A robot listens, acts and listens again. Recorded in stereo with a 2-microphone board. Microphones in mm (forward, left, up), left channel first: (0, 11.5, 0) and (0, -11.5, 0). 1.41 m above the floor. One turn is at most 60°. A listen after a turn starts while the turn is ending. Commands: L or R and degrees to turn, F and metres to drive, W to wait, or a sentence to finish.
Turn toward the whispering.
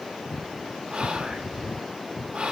R55
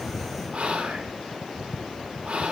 R60
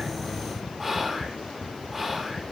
R15
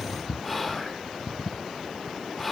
Found it: whispering, straight ahead, 1 to 2 m away.